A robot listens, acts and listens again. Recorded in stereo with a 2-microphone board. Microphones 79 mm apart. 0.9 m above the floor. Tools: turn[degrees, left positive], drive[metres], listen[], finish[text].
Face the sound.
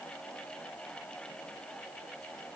Action: listen[]
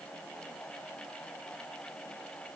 Action: listen[]
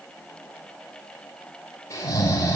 Thought: The snoring: about 40° left or 140° left.
Action: turn[40]
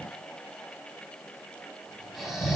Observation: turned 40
Action: finish[Found it: snoring, straight ahead.]